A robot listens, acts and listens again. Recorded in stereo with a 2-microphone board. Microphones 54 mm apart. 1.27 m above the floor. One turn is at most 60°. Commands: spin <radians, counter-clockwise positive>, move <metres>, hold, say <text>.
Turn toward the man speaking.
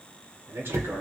spin -0.87
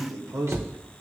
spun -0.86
spin -1.05
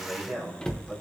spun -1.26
say Facing the man speaking.